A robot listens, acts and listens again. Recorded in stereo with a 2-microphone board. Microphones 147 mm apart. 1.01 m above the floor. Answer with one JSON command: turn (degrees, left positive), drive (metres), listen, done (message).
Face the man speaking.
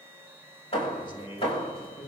{"turn": 35}
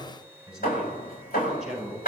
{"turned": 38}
{"done": "Facing the man speaking, over 4 m away."}